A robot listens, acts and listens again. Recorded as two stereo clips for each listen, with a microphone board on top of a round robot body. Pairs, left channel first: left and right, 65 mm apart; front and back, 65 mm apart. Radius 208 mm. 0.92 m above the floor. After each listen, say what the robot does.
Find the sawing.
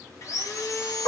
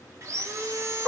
Turn 135° left.
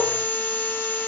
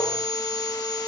Turn 20° left.
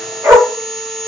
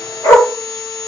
Found it: sawing, straight ahead.